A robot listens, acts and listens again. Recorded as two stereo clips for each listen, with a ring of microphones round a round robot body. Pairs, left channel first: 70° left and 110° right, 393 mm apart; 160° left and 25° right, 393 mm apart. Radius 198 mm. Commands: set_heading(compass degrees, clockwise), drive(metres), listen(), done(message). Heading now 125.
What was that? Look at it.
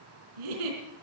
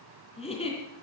set_heading(250)
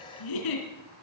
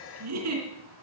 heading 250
set_heading(220)
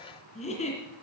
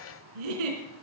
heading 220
done("Found it: a giggle, straight ahead.")